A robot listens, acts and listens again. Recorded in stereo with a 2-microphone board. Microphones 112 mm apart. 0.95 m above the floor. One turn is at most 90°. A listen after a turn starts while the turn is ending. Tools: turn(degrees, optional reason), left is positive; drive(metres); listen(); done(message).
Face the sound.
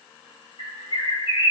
turn(degrees=60, reason="The bird: about 60° left or 120° left.")
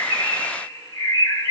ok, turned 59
turn(degrees=35, reason="So it is at 35° left.")
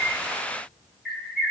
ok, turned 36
done("Found it: a bird, straight ahead, 1 to 2 m away.")